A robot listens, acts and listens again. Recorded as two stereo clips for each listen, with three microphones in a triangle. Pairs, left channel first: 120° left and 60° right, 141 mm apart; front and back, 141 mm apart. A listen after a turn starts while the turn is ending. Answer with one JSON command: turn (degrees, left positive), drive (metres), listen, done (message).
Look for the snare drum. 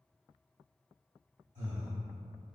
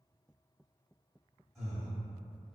{"listen": true}
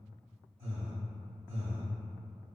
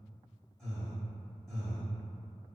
{"listen": true}
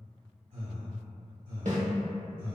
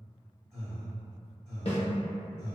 {"turn": -40}
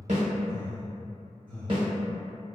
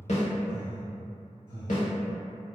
{"turn": -10}
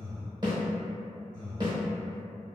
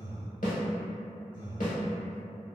{"done": "Found it: a snare drum, straight ahead, under 1 m away."}